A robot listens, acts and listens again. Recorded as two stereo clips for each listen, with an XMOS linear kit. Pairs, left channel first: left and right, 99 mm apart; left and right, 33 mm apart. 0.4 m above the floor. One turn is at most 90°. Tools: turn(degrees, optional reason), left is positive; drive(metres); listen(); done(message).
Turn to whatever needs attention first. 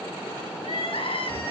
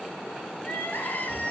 turn(degrees=70, reason="The crying: about 70° left or 110° left.")
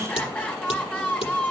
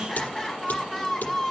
turn(degrees=15, reason="So it is at 15° left.")
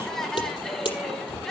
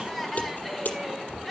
done("Facing the crying.")